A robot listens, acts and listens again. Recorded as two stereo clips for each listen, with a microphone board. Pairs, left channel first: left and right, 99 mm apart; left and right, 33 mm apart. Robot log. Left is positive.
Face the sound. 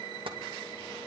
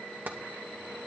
note: The tapping: about 60° right or 120° right.
cmd yaw -60
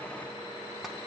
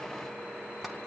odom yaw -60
cmd idle
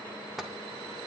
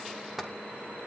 end: Found it: tapping, straight ahead.